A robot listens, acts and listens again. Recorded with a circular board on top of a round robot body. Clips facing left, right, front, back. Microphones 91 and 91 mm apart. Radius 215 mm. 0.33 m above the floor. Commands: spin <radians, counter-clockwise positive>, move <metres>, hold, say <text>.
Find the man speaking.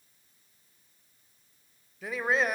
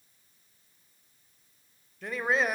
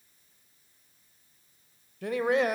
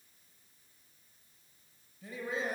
say Facing the man speaking.